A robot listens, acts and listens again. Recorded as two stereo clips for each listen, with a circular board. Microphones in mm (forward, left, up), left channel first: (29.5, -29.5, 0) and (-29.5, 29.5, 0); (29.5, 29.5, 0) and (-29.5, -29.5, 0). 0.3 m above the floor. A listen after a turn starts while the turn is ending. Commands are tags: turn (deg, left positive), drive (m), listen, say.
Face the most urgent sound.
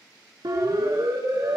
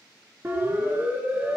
<turn deg="165"/>
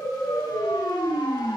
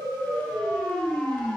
<turn deg="-30"/>
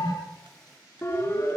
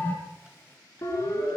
<say>Found it: a siren, straight ahead.</say>